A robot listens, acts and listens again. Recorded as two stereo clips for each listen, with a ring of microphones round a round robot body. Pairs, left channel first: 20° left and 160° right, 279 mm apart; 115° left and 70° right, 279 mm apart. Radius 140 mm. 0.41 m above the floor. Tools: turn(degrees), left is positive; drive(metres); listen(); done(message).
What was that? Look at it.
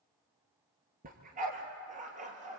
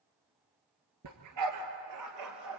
turn(degrees=-90)
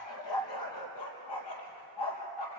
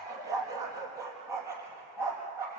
turn(degrees=10)
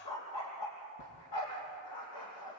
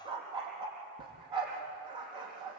done("Facing the dog barking.")